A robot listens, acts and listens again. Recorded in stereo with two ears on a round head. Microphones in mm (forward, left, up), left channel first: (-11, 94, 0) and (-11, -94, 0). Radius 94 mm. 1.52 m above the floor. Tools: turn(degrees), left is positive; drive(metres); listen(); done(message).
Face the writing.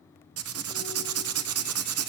turn(degrees=-90)
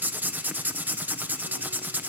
turn(degrees=-10)
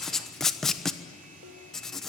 done("Facing the writing, 1 to 2 m away.")